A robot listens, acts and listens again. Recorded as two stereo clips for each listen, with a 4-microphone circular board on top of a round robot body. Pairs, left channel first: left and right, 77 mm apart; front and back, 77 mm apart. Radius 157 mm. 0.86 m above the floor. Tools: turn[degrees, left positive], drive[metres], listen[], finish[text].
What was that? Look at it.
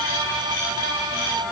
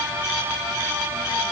Action: listen[]
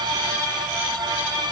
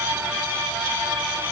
Action: listen[]
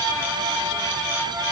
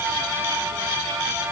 Action: finish[I can't make out anything to turn to.]